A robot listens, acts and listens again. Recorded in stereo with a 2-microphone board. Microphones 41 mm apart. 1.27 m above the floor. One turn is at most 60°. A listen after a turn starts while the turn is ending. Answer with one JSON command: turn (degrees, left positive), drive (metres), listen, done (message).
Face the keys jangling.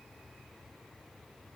{"listen": true}
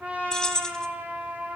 {"turn": 15}
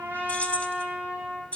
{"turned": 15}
{"turn": 60}
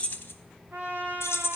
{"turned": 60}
{"turn": 60}
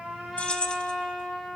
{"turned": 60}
{"turn": 25}
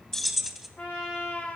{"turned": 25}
{"done": "Found it: keys jangling, straight ahead."}